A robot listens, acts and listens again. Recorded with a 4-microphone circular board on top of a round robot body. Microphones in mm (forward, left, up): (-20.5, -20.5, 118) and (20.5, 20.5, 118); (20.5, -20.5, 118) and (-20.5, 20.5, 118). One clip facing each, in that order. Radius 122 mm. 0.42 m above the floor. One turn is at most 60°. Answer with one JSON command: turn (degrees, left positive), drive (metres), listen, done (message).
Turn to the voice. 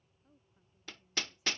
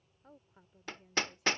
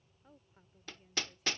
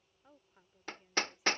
{"turn": 55}
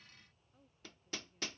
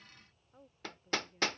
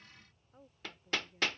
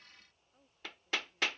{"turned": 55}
{"done": "Found it: a woman speaking, straight ahead."}